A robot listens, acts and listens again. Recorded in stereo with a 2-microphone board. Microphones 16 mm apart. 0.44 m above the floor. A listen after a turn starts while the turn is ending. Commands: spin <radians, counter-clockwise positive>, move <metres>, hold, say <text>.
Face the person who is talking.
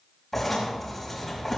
hold
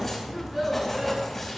spin -0.52
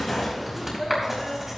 spin 0.35
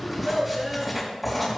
say Facing the child speaking, over 4 m away.